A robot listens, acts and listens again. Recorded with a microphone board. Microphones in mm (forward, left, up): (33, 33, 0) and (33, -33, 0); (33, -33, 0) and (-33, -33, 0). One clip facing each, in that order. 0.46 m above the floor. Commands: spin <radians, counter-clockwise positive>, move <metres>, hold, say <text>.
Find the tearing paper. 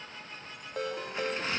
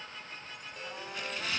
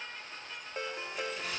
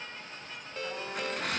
spin 2.62
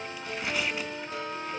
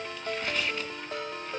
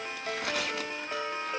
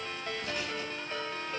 spin 0.17
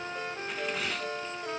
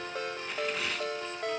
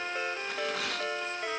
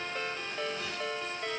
say Found it: tearing paper, straight ahead, 1 to 2 m away.